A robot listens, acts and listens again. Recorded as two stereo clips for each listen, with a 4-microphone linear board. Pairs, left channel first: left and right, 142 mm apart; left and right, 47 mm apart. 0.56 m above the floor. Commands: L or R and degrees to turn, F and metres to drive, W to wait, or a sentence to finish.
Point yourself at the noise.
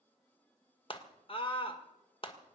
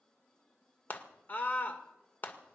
L40
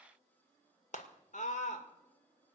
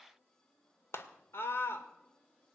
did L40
L90
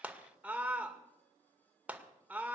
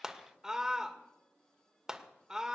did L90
R15
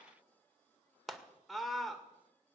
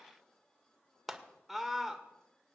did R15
Found it: a scream, straight ahead, 2 to 4 m away.